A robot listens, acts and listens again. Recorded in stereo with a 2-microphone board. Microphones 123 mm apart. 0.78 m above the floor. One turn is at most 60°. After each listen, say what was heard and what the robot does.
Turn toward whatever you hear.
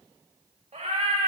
The cat meowing: about 70° right or 110° right. Turn 60° right.
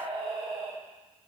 So it is at 40° right. Turn 40° right.
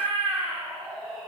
Found it: a cat meowing, straight ahead.